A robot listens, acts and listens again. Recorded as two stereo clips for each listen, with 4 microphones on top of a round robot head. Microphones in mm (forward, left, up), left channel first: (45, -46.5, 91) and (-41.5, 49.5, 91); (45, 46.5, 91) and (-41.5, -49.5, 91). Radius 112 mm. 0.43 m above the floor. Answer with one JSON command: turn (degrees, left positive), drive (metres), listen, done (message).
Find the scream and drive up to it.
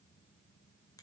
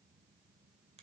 {"listen": true}
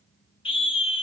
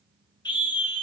{"drive": 1.0}
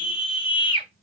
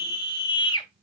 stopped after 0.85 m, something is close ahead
{"done": "Blocked. The scream is further on, straight ahead."}